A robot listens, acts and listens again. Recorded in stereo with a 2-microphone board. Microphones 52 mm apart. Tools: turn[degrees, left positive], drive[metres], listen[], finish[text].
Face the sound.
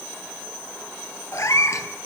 Action: turn[90]
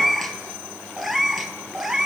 Thought: So it is at 10° right.
Action: turn[-10]
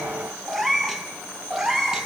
Thought: The cat meowing is now 10° right.
Action: turn[-10]
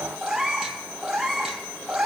Thought: The cat meowing is now 10° right.
Action: turn[-10]
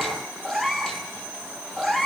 Action: finish[Facing the cat meowing, 2 to 4 m away.]